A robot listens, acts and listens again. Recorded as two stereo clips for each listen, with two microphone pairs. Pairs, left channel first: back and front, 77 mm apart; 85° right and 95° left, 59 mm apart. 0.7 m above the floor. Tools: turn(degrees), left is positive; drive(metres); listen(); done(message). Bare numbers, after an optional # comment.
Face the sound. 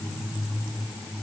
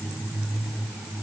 listen()
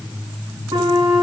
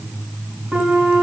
# The flute: 20° left.
turn(20)
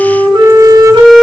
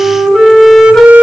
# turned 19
done("Found it: a flute, straight ahead.")